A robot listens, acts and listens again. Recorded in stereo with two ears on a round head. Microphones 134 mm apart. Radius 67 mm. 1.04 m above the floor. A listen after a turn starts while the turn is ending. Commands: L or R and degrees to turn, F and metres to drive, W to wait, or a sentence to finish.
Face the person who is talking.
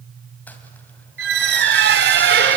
W
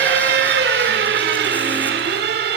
W
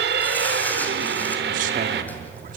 R55
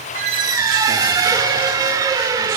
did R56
W
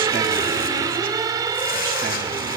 W
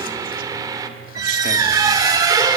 I heard a man speaking, but can't make it out now. It was about straight ahead or 70° right.